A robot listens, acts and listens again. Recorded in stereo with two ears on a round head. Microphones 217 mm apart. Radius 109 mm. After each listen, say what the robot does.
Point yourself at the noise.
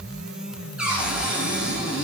Turn 30° right.
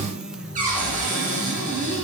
Turn 145° right.
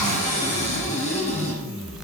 Turn 30° left.
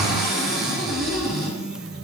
Facing the cupboard door, over 4 m away.